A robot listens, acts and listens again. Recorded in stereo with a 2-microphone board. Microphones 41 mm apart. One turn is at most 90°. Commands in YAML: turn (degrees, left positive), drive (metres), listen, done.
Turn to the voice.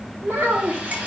turn: -90
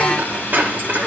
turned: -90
listen: true
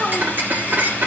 turn: -20
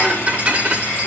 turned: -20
listen: true
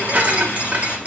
listen: true
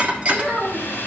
turn: -10
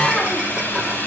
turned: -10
listen: true
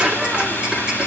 listen: true
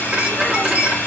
done: "Facing where the child speaking came from. I can't hear it now."